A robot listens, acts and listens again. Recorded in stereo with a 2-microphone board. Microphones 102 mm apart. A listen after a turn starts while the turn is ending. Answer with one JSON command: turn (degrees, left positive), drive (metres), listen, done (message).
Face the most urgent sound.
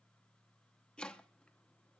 {"listen": true}
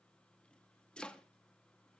{"listen": true}
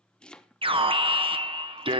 {"turn": -60}
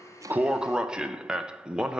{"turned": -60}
{"turn": -10}
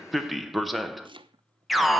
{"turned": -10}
{"done": "Found it: an alarm, straight ahead, under 1 m away."}